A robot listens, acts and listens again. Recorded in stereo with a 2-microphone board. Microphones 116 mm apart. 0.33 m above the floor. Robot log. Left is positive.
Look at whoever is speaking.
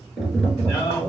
note: The man speaking: about 30° left or 150° left.
cmd yaw +30
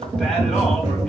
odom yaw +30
cmd idle
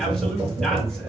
cmd idle
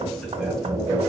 end: I heard a man speaking, but can't make it out now. It was about straight ahead or 120° left.